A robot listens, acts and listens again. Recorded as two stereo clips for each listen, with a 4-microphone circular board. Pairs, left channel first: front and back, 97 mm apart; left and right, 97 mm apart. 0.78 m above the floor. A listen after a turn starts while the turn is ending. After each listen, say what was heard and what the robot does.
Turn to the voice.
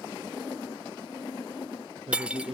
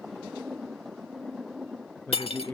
The man speaking: 160° left. Turn 160° left.
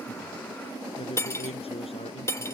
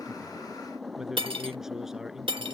Facing the man speaking.